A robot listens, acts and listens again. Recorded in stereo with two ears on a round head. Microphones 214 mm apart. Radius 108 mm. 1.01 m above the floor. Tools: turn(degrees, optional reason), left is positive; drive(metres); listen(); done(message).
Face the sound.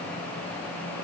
listen()
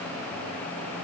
listen()
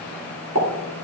turn(degrees=-65, reason="The pop: about 65° right or 115° right.")
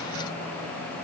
listen()
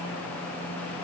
done("I heard a pop, but can't make it out now. It was about straight ahead or 50° right.")